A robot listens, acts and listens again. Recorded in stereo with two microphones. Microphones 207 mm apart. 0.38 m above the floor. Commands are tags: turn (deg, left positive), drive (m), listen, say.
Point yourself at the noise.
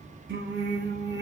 <turn deg="-65"/>
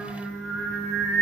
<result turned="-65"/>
<turn deg="-10"/>
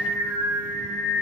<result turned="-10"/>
<turn deg="-10"/>
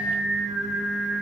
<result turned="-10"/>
<say>Facing the singing, 2 to 4 m away.</say>